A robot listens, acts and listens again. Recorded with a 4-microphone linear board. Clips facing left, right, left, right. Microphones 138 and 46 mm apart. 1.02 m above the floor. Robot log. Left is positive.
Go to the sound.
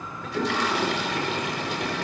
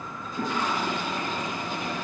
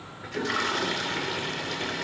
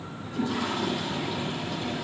cmd yaw +90
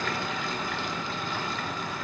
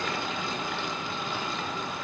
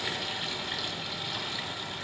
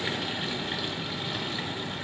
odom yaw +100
note: So it is at 20° right.
cmd yaw -20
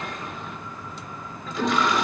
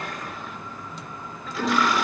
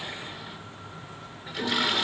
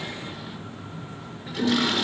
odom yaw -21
cmd fwd 1.0
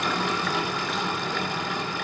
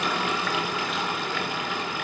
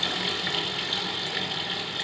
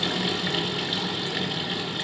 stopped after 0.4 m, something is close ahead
note: The toilet flushing is now 10° right.
cmd yaw -10
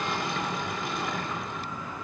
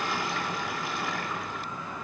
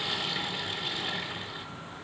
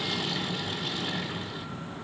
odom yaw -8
end: Blocked. The toilet flushing is further on, straight ahead.